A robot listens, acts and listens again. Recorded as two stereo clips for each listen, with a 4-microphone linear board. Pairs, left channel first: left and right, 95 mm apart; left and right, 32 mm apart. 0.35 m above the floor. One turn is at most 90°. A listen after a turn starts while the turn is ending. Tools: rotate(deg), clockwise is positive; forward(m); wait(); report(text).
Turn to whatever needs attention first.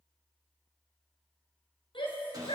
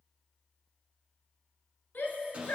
rotate(-60)
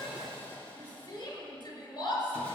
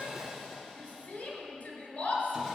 rotate(-60)
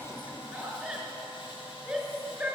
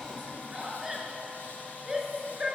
report("Found it: a shout, straight ahead, over 4 m away.")